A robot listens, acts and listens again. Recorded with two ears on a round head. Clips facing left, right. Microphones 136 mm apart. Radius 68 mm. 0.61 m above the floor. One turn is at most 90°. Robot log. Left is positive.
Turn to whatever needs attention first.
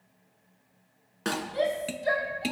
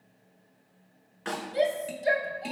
note: The shout: about 25° right or 155° right.
cmd yaw -25
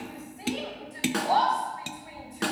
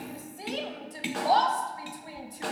note: So it is at 130° right.
cmd yaw -90
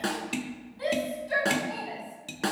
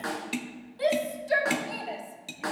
note: The shout is now 65° right.
cmd yaw -65
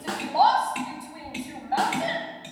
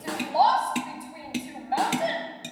note: The shout is now 15° right.
cmd yaw -15
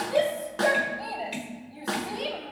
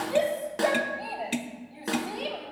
end: Found it: a shout, straight ahead, 2 to 4 m away.